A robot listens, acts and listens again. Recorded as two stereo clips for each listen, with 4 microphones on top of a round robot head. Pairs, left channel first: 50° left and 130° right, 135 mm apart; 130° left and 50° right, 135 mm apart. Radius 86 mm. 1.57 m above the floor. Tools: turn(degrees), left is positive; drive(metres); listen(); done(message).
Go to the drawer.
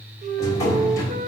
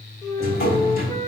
turn(degrees=115)
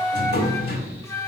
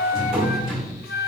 turn(degrees=40)
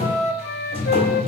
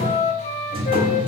drive(metres=1.0)
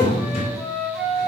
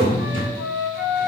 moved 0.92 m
drive(metres=1.0)
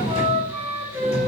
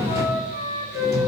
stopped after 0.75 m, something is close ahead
turn(degrees=15)
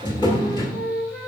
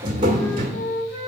done("I am next to the drawer.")